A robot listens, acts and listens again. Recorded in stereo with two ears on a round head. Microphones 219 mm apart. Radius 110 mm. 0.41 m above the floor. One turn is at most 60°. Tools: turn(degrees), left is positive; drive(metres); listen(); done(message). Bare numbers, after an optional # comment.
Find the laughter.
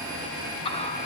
# The laughter: about 25° left or 155° left.
turn(25)
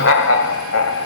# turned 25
# So it is at 115° left.
turn(60)
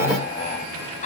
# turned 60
# The laughter is now 30° left.
turn(30)
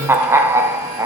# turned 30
# The laughter is now 15° right.
turn(-15)
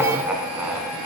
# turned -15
done("Facing the laughter, 2 to 4 m away.")